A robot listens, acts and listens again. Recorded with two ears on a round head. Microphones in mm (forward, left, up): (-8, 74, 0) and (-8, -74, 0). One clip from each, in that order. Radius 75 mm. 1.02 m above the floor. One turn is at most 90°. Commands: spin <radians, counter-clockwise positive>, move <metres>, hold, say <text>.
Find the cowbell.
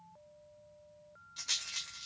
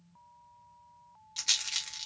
hold
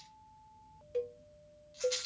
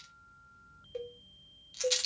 spin 0.52
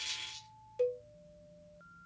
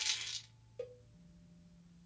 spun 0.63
spin 1.57
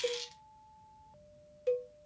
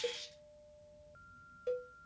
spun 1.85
spin 0.44
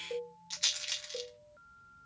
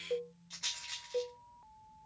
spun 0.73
spin -0.26
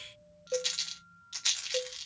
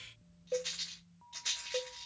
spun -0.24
say Found it: a cowbell, straight ahead.